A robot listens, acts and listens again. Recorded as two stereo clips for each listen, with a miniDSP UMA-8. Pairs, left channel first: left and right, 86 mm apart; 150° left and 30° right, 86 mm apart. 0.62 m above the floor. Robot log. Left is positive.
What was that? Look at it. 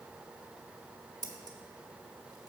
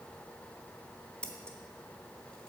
note: The scissors: 135° right.
cmd yaw -135
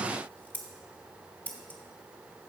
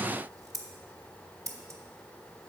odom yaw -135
note: The scissors is now 20° left.
cmd yaw +20
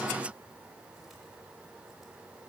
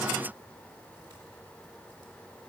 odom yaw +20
cmd idle
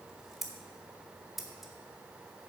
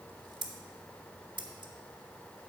end: Facing the scissors.